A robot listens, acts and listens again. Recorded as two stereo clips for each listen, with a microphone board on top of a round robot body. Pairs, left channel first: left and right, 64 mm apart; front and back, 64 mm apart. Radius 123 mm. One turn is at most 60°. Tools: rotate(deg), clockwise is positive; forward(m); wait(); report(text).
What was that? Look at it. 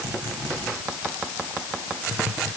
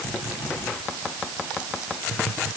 wait()
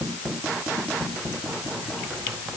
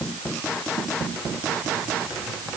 wait()
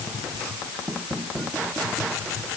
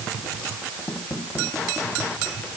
report("I can't make out anything.")